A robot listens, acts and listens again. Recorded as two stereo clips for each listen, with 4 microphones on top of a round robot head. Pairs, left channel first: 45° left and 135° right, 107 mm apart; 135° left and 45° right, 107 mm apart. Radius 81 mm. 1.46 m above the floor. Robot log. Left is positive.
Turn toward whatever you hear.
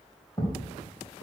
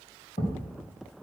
note: The thud: 110° left.
cmd yaw +110
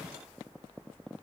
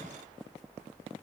end: I heard a thud from this way, but can't make it out now.